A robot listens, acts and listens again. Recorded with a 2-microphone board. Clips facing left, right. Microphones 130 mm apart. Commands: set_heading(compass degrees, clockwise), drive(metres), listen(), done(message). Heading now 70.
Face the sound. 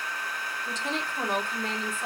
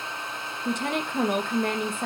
set_heading(130)
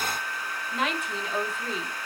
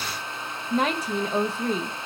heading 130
set_heading(170)
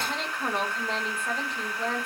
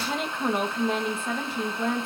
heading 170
done("Facing the woman speaking, 1 to 2 m away.")